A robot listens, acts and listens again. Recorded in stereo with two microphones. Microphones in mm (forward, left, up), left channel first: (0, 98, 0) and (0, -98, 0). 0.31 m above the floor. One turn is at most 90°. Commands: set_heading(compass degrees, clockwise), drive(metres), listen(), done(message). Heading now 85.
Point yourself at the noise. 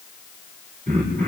set_heading(125)
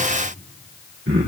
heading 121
set_heading(211)
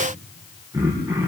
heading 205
set_heading(220)
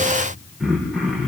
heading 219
done("Facing the throat clearing, over 4 m away.")